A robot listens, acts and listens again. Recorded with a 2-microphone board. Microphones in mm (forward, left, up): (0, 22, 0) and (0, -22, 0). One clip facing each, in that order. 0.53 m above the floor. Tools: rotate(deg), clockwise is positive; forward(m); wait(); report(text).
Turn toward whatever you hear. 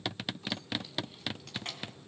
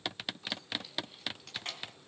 rotate(-30)
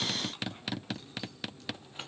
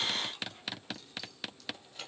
rotate(-150)
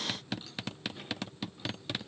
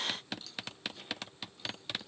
wait()
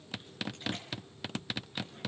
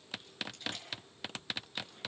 wait()
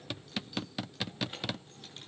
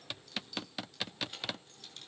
rotate(-20)
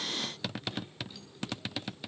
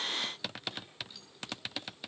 wait()
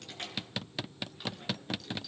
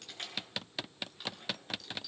report("Found it: keys jangling, straight ahead, over 4 m away.")